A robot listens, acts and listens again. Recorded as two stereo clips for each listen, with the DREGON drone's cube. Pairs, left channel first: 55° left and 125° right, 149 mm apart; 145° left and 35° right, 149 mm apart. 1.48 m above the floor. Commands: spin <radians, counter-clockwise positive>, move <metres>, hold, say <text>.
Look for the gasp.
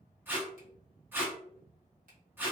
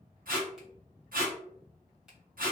hold
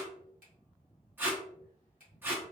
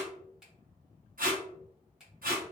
hold
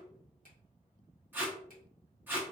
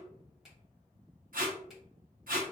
say I can't make out a gasp, only tape being pulled and a finger snap.